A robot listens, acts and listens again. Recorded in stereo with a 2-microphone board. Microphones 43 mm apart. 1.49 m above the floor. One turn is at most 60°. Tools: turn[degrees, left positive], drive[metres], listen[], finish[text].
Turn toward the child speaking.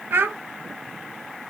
Thought: The child speaking: about 60° right or 120° right.
Action: turn[-60]
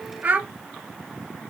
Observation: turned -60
Thought: So it is at 45° right.
Action: turn[-45]
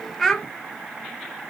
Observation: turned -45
Thought: The child speaking is now 10° left.
Action: turn[10]
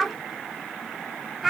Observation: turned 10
Action: finish[Found it: a child speaking, straight ahead.]